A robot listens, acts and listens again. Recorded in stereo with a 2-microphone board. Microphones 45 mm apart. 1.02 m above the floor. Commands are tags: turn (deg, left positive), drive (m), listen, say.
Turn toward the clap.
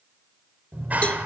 <turn deg="-35"/>
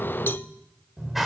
<say>Facing the clap, 2 to 4 m away.</say>